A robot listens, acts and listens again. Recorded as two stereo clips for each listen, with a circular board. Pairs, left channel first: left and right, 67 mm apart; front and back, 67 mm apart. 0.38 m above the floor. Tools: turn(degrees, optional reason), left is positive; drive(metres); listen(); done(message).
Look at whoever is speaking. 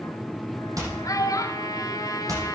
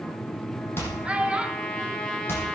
turn(degrees=110, reason="The child speaking: 110° left.")
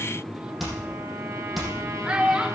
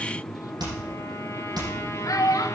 turn(degrees=-15, reason="The child speaking is now 15° right.")
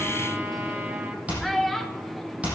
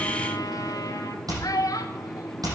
done("Facing the child speaking.")